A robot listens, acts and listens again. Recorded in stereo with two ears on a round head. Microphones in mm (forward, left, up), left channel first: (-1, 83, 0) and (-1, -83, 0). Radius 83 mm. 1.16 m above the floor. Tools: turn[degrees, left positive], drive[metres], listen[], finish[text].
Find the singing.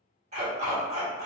Action: listen[]
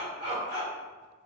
Action: listen[]
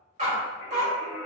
Thought: The singing: about 15° left or 165° left.
Action: turn[15]
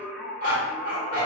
Action: finish[Found it: singing, straight ahead.]